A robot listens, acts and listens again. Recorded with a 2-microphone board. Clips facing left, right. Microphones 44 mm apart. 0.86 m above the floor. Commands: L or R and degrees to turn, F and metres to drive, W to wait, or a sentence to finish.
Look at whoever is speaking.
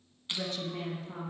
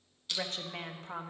R60
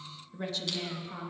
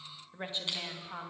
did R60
R30
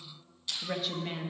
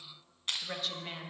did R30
Facing the woman speaking, 1 to 2 m away.